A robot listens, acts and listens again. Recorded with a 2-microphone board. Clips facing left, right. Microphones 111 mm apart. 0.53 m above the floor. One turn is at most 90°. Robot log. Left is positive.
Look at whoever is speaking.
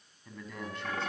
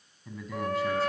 cmd yaw -30
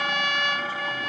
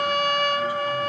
cmd idle
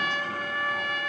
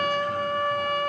cmd idle
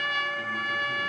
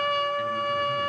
end: I heard a man speaking, but can't make it out now. It was about 25° left or 145° right.